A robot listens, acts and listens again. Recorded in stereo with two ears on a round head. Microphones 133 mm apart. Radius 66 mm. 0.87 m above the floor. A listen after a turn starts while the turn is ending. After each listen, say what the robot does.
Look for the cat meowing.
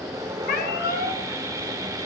Turn 70° left.
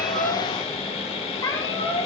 Turn 30° left.
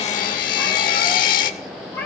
Turn 15° left.
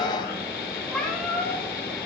Found it: a cat meowing, straight ahead, 2 to 4 m away.